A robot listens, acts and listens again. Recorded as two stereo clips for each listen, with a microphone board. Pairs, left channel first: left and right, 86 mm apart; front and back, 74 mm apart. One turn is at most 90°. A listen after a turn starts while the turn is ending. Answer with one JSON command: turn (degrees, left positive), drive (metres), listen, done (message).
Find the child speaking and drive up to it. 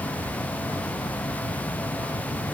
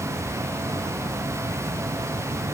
{"listen": true}
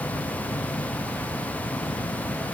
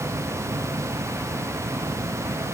{"listen": true}
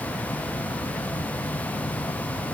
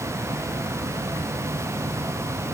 {"done": "I can't make out a child speaking to turn to."}